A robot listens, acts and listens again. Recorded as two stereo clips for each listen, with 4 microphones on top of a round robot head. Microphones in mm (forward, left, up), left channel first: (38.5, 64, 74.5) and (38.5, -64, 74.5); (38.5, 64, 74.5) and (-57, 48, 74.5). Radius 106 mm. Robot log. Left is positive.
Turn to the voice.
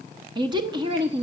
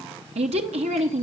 note: The woman speaking: 150° right.
cmd yaw -150
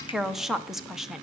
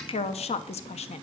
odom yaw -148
end: Found it: a woman speaking, straight ahead.